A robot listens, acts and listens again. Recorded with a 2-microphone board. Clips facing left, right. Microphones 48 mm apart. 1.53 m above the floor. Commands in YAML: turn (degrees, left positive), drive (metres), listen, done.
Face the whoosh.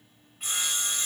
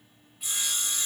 listen: true
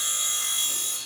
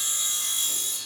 listen: true
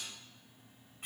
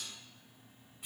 done: "I can't make out a whoosh to turn to."